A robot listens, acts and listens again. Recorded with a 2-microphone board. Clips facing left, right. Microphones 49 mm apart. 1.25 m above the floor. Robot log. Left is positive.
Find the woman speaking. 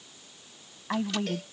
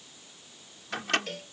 cmd yaw +90
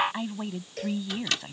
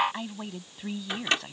end: Facing the woman speaking.